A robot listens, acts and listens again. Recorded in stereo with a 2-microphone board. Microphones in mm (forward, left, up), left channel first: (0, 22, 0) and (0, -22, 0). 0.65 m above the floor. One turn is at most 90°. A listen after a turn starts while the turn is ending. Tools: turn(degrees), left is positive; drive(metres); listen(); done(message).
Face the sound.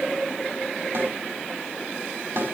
turn(degrees=-50)
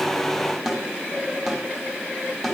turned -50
done("Facing the snare drum, over 4 m away.")